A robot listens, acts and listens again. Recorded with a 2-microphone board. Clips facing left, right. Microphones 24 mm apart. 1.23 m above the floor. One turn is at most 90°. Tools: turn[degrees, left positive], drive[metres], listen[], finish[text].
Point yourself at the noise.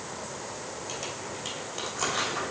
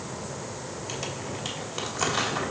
Action: turn[-30]
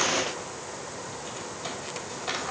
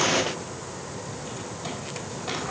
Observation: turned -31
Action: listen[]
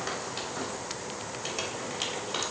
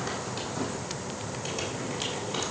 Action: listen[]
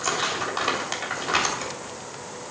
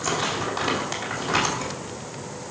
Thought: So it is at 15° left.
Action: turn[15]
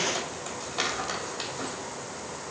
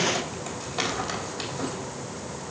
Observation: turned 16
Action: finish[Found it: crumpling, straight ahead.]